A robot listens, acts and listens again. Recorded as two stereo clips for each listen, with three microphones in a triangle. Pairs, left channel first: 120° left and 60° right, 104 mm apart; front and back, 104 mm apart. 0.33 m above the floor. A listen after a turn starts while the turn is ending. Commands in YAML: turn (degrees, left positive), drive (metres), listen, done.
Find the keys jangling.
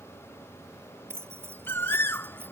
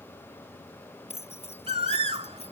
done: "Found it: keys jangling, straight ahead."